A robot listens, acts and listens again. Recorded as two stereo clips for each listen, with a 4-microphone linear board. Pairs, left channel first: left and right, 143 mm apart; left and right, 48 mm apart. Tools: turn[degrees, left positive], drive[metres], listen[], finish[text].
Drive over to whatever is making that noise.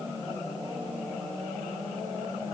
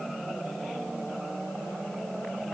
Action: listen[]
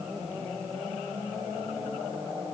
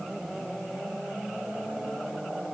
Action: listen[]
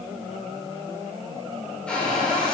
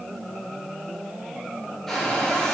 Action: turn[30]
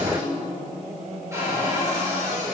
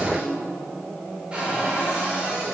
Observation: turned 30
Thought: So it is at 20° right.
Action: turn[-20]
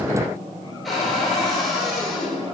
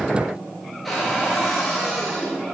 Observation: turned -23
Action: drive[1.0]
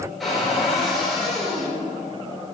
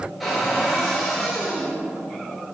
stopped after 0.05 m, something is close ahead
Action: finish[Something is in my way. I am facing the cupboard door but have not reached it.]